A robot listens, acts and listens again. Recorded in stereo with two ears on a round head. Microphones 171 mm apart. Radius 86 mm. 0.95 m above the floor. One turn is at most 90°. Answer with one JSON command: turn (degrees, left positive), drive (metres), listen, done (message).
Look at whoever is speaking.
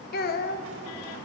{"turn": 55}
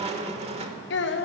{"turn": 70}
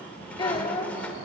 {"turn": 25}
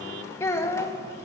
{"turn": 15}
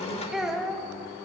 {"done": "Found it: a child speaking, straight ahead."}